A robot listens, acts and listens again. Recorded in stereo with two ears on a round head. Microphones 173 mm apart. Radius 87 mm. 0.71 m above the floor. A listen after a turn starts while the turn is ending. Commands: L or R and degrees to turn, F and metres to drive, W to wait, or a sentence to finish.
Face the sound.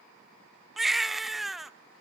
L30
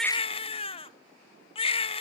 L150
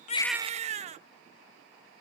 R35
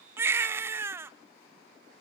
R15
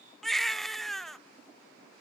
Facing the baby crying, under 1 m away.